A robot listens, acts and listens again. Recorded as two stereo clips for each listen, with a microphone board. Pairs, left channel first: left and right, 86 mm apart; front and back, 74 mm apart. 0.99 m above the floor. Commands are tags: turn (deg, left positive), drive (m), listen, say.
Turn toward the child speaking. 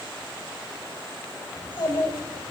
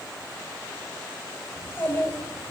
<turn deg="65"/>
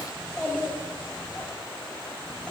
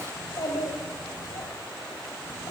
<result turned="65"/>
<turn deg="20"/>
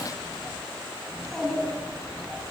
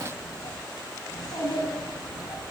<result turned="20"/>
<turn deg="10"/>
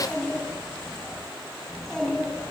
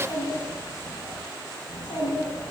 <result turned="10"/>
<say>Facing the child speaking.</say>